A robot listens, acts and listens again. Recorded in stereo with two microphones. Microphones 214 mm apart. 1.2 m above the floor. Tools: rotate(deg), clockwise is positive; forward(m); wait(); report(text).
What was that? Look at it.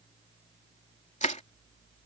rotate(-35)
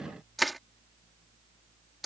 report("Found it: crushing, straight ahead.")